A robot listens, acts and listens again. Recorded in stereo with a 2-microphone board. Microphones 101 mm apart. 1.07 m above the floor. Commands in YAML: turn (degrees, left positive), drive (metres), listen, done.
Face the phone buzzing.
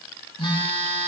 turn: 65
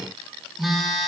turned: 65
done: "Found it: a phone buzzing, straight ahead, over 4 m away."